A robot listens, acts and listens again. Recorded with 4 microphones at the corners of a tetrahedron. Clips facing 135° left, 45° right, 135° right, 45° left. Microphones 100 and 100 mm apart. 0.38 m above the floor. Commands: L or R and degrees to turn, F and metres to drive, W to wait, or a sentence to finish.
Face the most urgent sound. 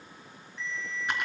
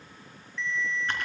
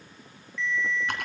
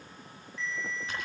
L90
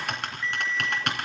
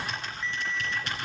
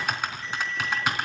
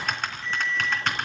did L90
L25
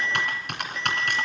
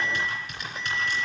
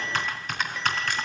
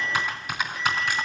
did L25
Facing the alarm.